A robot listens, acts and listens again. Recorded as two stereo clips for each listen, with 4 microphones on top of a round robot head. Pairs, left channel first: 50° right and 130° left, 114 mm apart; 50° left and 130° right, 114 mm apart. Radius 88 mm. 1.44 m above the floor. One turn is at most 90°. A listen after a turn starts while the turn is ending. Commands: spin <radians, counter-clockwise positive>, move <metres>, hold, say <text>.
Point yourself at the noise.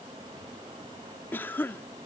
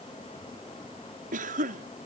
spin -1.57
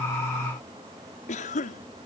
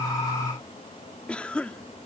spin -0.52
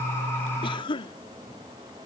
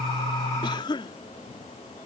say Found it: a cough, straight ahead.